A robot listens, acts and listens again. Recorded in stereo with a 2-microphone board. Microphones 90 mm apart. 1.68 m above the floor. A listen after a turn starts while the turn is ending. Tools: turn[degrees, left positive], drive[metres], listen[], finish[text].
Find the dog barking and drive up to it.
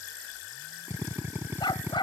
Thought: The dog barking: about 60° left or 120° left.
Action: turn[60]
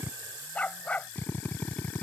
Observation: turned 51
Thought: So it is at 15° left.
Action: turn[15]
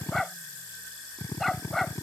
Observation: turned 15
Action: drive[1.0]
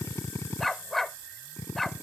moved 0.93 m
Action: drive[1.0]
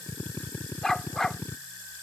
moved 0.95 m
Action: drive[1.0]
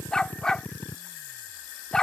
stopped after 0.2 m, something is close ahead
Thought: The dog barking is now 10° left.
Action: turn[10]
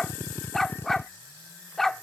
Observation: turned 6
Action: finish[Arrived at the dog barking, straight ahead.]